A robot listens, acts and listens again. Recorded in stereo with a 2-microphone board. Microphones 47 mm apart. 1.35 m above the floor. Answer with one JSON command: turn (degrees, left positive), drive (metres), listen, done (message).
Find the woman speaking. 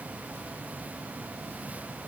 {"listen": true}
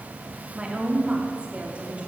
{"turn": -30}
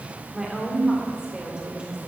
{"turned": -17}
{"turn": -20}
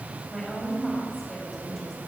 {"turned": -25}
{"done": "Facing the woman speaking, over 4 m away."}